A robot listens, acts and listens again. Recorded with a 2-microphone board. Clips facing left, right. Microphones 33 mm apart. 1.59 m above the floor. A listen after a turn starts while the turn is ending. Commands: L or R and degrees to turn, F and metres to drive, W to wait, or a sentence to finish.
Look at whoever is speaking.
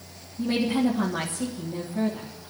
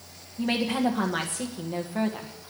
R70
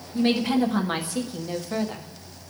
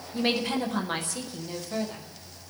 L25
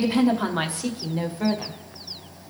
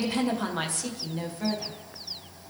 L30
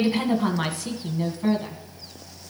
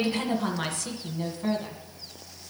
L10
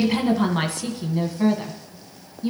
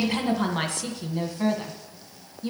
Facing the woman speaking.